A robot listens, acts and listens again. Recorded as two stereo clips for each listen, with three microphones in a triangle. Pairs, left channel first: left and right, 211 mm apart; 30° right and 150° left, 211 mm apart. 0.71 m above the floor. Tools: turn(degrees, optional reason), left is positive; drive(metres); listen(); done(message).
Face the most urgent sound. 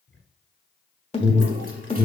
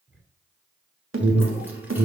turn(degrees=150, reason="The alarm: 150° left.")
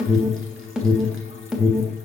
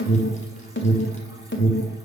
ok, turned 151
done("Found it: an alarm, straight ahead, 1 to 2 m away.")